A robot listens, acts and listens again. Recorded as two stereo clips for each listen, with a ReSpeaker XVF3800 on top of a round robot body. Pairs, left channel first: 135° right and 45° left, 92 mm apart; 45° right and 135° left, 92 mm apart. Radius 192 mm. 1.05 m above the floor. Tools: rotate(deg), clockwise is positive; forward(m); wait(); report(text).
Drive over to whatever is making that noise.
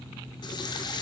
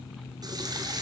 rotate(-180)
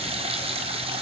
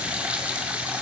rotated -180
rotate(-60)
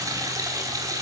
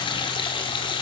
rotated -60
rotate(10)
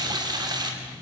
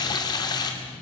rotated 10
forward(1.0)
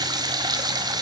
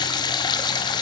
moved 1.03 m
forward(1.0)
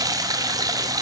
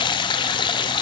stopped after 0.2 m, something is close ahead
rotate(10)
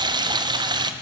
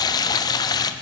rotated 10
report("I am next to the running tap.")